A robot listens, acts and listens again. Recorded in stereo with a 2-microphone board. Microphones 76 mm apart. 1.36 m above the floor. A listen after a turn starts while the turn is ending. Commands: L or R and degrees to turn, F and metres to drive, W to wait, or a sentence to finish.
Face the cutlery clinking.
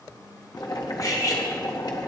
L50
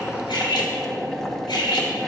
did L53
L75
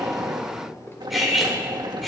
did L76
Found it: cutlery clinking, straight ahead.